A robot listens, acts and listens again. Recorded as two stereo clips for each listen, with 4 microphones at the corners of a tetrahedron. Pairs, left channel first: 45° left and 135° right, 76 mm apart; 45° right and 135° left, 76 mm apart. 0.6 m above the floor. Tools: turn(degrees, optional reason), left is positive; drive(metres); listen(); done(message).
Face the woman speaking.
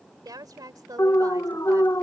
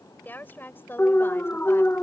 turn(degrees=-105, reason="The woman speaking: 105° right.")
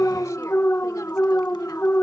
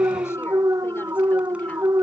listen()
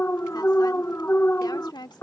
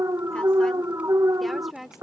turn(degrees=50, reason="The woman speaking is now 50° left.")
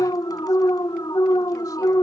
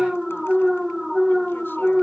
listen()
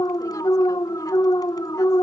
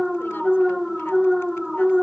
listen()
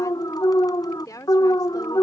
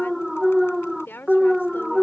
turn(degrees=10, reason="The woman speaking is now 10° left.")
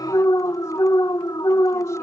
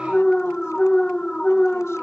listen()
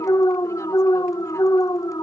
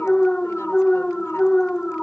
listen()
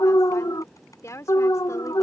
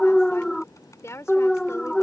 done("Facing the woman speaking.")